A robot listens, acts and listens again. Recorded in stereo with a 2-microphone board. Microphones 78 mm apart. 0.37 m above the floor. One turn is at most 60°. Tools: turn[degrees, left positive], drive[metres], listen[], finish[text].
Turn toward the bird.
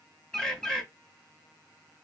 Action: turn[30]
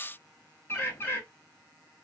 Thought: So it is at 145° left.
Action: turn[60]
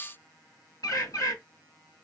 Thought: The bird is now 115° left.
Action: turn[60]
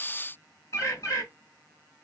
Thought: The bird is now 55° left.
Action: turn[55]
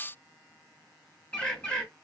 Thought: The bird is now 20° left.
Action: turn[20]
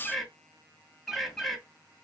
Action: finish[Facing the bird.]